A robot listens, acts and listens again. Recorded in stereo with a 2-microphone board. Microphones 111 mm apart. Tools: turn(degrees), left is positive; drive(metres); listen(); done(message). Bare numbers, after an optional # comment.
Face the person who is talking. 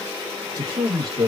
# The man speaking: about 35° right or 145° right.
turn(-35)
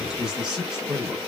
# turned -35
done("Facing the man speaking.")